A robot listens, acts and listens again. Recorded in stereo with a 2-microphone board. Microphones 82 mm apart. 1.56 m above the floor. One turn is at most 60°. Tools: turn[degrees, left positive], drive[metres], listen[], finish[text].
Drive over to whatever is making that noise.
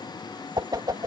Thought: The whoosh: about 55° right or 125° right.
Action: turn[-55]
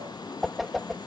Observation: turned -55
Action: drive[1.0]
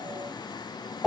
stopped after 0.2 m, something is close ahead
Action: finish[Something is in my way. I am facing the whoosh but have not reached it.]